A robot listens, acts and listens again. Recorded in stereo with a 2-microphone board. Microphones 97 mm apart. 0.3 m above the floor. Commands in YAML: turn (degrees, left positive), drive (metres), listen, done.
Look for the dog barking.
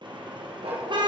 turn: -90
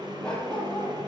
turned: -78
turn: 10
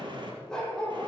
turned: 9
turn: 10
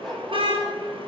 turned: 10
done: "Facing the dog barking, over 4 m away."